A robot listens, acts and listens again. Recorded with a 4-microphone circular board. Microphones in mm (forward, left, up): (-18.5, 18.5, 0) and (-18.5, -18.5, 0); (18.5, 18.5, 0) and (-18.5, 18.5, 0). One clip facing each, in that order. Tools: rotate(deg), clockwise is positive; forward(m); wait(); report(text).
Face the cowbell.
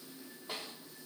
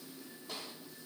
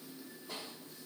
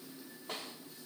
wait()
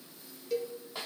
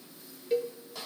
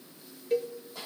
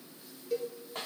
rotate(35)
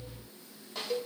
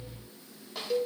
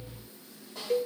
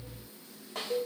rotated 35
report("Found it: a cowbell, straight ahead, 1 to 2 m away.")